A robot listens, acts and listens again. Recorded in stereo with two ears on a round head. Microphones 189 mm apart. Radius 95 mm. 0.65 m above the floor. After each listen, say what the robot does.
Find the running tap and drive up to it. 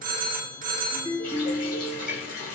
Turn 40° left.
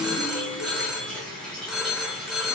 Drive 1.0 m forward.
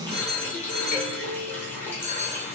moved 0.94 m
Turn 10° left.
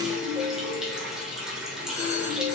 Drive 1.0 m forward.
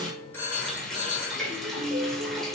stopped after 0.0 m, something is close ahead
I am next to the running tap.